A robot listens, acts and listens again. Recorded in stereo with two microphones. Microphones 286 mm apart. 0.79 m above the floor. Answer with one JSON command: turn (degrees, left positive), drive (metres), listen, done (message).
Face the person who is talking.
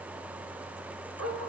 {"listen": true}
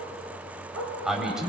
{"turn": 30}
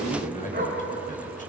{"turn": 150}
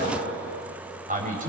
{"turn": -30}
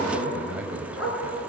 {"done": "Found it: a man speaking, straight ahead, 2 to 4 m away."}